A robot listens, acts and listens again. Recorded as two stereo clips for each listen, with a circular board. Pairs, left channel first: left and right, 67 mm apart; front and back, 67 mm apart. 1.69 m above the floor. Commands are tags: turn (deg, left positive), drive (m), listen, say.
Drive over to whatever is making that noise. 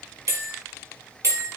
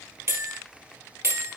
<turn deg="-135"/>
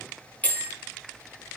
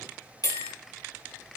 <turn deg="20"/>
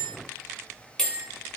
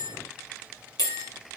<turn deg="10"/>
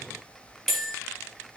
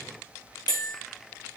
<drive m="1.0"/>
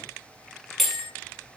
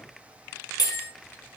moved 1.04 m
<drive m="1.0"/>
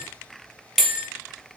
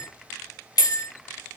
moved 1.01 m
<drive m="1.0"/>
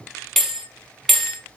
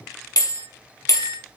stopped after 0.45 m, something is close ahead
<say>I am next to the bell.</say>